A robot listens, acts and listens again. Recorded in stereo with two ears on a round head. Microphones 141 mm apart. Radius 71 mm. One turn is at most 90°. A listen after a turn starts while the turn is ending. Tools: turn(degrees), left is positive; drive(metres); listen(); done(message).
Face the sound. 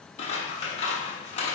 turn(degrees=40)
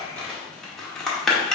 done("Facing the scissors, 1 to 2 m away.")